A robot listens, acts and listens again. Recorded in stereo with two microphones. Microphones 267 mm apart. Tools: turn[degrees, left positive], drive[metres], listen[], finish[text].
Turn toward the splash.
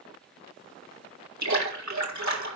Action: turn[-90]
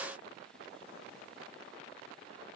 Action: finish[I heard a splash from this way, but can't make it out now.]